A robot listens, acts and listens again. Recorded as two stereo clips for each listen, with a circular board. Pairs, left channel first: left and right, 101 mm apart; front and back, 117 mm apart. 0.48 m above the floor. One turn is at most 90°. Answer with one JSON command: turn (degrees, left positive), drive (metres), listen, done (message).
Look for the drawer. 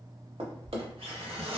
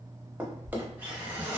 {"turn": -90}
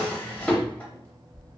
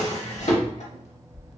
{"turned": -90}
{"turn": 15}
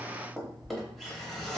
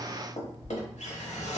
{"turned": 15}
{"done": "Facing the drawer, under 1 m away."}